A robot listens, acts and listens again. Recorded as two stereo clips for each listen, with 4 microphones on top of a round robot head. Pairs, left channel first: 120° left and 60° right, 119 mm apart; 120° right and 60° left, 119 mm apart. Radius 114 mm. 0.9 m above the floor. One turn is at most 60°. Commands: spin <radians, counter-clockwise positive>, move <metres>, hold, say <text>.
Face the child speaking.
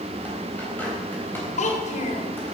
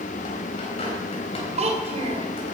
spin 1.05
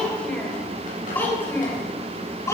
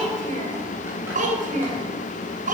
spin 0.96
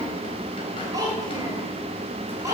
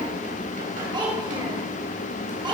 say Facing the child speaking, over 4 m away.